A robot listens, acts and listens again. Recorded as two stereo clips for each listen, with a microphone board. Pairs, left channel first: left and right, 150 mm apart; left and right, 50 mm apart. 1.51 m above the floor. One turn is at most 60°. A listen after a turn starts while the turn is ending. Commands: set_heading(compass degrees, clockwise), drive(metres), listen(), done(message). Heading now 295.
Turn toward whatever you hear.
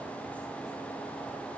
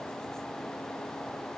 listen()
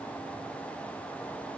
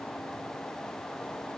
listen()
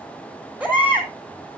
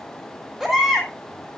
set_heading(325)
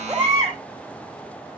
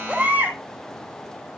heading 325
set_heading(25)
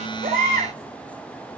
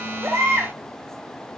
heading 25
set_heading(85)
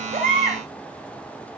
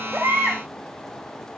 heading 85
set_heading(105)
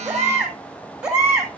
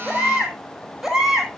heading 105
done("Found it: a baby crying, straight ahead.")